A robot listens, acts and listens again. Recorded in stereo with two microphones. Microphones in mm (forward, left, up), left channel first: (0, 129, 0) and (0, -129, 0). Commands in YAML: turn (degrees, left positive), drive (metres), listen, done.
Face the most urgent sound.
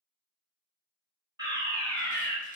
turn: -15
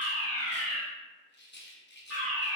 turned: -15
done: "Found it: a fire alarm, straight ahead."